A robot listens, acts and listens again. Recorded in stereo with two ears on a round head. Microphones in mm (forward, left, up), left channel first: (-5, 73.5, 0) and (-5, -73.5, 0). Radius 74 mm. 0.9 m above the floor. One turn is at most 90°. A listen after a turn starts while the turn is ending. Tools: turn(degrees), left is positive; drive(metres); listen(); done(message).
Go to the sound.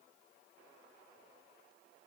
listen()
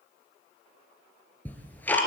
turn(degrees=30)
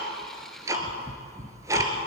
turn(degrees=-20)
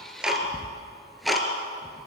drive(metres=1.0)
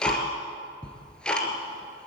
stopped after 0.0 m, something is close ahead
done("Something is in my way. I am facing the ticking but have not reached it.")